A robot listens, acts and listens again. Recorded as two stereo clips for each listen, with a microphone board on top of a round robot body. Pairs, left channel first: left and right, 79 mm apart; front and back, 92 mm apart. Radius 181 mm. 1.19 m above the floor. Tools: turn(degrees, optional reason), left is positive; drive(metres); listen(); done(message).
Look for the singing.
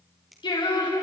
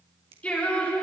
turn(degrees=75, reason="The singing: 75° left.")
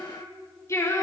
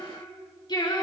turn(degrees=40, reason="The singing is now 40° left.")
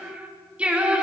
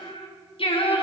turn(degrees=-15, reason="The singing is now 15° right.")
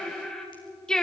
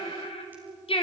turn(degrees=10, reason="The singing is now 10° left.")
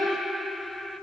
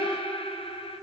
done("Facing the singing, 2 to 4 m away.")